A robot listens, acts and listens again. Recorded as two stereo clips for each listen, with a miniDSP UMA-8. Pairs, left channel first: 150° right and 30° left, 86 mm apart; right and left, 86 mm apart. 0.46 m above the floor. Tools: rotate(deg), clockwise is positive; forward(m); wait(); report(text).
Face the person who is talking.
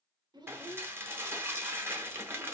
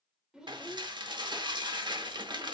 rotate(-10)
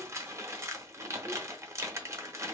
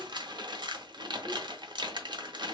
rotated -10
wait()
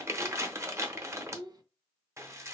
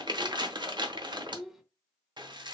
report("Facing the child speaking.")